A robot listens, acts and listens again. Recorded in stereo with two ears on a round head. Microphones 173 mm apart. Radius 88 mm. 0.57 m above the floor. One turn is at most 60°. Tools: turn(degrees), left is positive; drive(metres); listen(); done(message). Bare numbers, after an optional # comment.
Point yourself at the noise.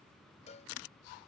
# The cowbell: about 35° left or 145° left.
turn(35)
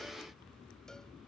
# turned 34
listen()
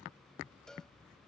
done("Found it: a cowbell, straight ahead.")